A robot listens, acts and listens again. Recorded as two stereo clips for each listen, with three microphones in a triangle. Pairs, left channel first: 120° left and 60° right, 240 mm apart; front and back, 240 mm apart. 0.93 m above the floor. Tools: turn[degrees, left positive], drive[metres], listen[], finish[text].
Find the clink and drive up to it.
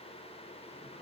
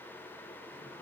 Action: listen[]
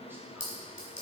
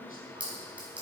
Thought: The clink: 95° left.
Action: turn[95]
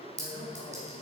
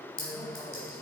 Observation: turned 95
Action: drive[1.0]
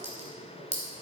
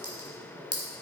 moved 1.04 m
Action: drive[1.0]
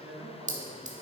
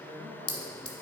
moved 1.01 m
Action: drive[1.0]
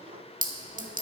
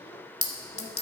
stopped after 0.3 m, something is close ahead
Thought: The clink is now 10° right.
Action: turn[-10]
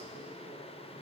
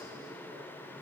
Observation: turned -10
Action: listen[]
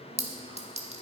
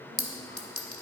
Action: finish[I am next to the clink.]